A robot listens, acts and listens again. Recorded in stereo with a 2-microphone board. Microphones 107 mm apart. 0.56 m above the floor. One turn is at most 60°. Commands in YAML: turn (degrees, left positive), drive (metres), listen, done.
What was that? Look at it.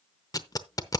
turn: 35
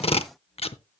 turn: 60
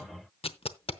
turn: 60
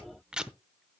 turn: -10
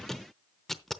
done: "Facing the tape being pulled."